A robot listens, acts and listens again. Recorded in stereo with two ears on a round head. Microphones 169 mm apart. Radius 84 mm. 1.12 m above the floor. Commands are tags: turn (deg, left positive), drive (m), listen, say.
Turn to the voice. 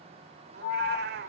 <listen/>
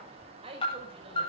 <turn deg="-30"/>
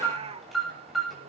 <listen/>
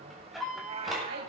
<listen/>
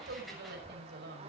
<turn deg="-120"/>
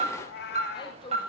<turn deg="25"/>
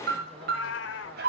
<listen/>
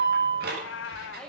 <say>Found it: a woman speaking, straight ahead, over 4 m away.</say>